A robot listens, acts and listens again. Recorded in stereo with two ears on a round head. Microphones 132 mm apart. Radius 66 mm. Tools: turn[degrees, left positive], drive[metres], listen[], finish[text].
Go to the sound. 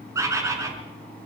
Thought: The bird: about 20° right or 160° right.
Action: turn[-20]
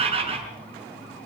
Thought: So it is at 140° right.
Action: turn[-140]
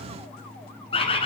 Thought: The bird is now 35° left.
Action: turn[35]
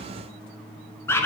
Thought: The bird is now 15° left.
Action: turn[15]
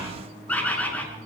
Thought: The bird is now 10° left.
Action: turn[10]
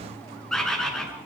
Action: drive[1.0]
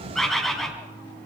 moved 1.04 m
Action: drive[1.0]
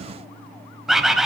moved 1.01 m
Action: drive[1.0]
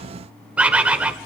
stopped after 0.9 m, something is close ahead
Thought: The bird is now 10° right.
Action: turn[-10]
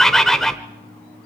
Action: finish[Arrived at the bird, straight ahead.]